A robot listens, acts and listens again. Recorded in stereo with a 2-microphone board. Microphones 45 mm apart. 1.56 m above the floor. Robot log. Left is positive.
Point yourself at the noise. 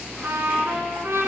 note: The trumpet: about 70° right or 110° right.
cmd yaw -70
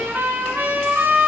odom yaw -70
note: So it is at 40° right.
cmd yaw -40
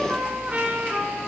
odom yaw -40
note: The trumpet is now 25° right.
cmd yaw -25
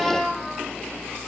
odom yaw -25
end: Facing the trumpet, 1 to 2 m away.